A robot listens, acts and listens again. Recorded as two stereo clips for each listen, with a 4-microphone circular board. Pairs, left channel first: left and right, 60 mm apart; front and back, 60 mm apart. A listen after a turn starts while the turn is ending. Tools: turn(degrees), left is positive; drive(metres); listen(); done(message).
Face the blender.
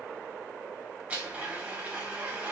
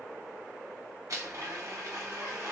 turn(degrees=-155)
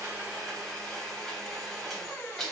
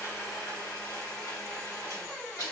done("Facing the blender.")